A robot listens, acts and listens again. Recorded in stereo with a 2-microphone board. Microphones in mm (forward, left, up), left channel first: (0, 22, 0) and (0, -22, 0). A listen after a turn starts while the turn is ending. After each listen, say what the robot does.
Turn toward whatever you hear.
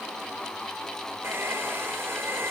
Turn 90° right.
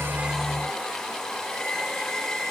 Found it: a hair dryer, straight ahead, 2 to 4 m away.